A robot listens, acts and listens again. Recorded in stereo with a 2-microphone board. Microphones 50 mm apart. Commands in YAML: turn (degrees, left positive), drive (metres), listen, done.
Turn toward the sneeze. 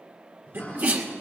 turn: -50
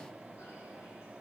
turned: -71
listen: true
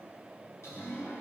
done: "I heard a sneeze, but can't make it out now. It was about 20° left or 60° right."